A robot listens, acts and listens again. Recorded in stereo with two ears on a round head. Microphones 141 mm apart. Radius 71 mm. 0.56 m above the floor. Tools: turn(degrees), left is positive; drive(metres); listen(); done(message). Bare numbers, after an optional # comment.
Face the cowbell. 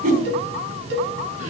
turn(-90)
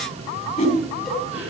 listen()
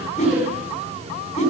listen()
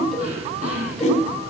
done("Facing where the cowbell came from. I can't hear it now.")